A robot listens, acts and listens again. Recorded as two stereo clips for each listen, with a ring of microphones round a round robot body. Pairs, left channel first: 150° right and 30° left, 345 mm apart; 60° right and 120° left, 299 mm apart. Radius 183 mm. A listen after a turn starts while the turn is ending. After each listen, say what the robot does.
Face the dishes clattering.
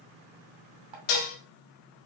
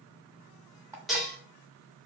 Turn 150° right.
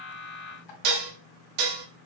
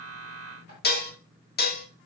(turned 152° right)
Facing the dishes clattering.